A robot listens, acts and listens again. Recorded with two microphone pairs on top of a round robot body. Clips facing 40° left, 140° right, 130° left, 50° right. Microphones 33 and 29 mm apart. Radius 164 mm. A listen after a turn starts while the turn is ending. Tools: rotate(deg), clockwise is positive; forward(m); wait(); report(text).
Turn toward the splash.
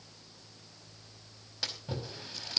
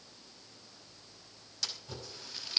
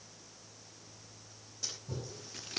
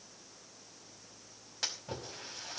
rotate(25)
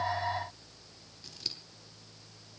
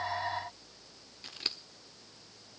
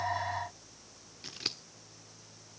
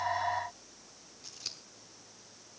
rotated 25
report("Facing where the splash came from. I can't hear it now.")